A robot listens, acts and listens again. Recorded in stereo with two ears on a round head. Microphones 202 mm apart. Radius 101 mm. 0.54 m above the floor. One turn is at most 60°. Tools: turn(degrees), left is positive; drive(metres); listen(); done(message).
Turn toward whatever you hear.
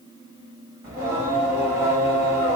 turn(degrees=-30)
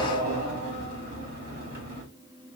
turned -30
turn(degrees=-60)
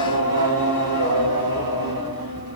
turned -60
turn(degrees=-60)
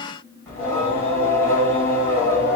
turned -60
turn(degrees=10)
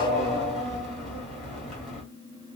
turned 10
done("Found it: singing, straight ahead, 2 to 4 m away.")